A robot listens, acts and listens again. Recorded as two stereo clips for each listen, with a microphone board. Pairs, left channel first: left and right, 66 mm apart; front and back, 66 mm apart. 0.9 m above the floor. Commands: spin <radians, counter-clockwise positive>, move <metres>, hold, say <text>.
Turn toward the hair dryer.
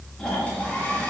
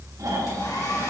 spin 0.44
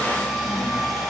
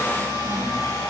say Found it: a hair dryer, straight ahead.